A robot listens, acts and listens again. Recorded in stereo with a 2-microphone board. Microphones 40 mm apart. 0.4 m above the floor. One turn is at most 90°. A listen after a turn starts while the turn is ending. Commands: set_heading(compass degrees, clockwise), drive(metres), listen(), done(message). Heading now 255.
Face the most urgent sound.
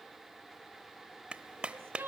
set_heading(345)
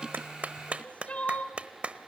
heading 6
set_heading(331)
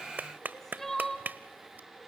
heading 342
set_heading(332)
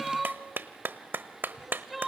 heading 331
done("Facing the crying, 1 to 2 m away.")